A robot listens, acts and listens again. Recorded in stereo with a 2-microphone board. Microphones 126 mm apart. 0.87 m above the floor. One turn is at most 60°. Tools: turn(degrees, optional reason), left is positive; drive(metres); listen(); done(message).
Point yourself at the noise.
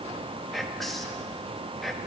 turn(degrees=30)
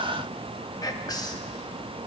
turn(degrees=60, reason="So it is at 145° left.")
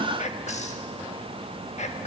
turn(degrees=60, reason="The whispering is now 90° left.")
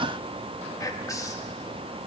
turn(degrees=30, reason="The whispering is now 30° left.")
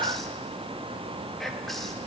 done("Facing the whispering, 1 to 2 m away.")